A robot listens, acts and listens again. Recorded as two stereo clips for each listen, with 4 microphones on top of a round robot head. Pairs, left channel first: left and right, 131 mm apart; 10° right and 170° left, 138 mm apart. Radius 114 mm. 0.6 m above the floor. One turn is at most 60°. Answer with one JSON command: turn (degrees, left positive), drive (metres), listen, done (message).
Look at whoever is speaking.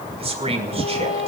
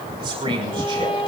{"turn": -60}
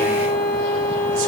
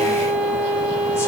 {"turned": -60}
{"turn": -60}
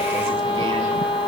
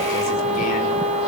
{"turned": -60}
{"turn": -10}
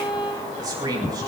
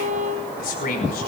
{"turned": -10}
{"turn": -25}
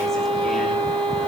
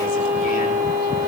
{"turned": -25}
{"listen": true}
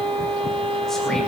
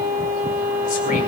{"listen": true}
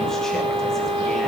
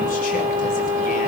{"done": "Facing where the man speaking came from. I can't hear it now."}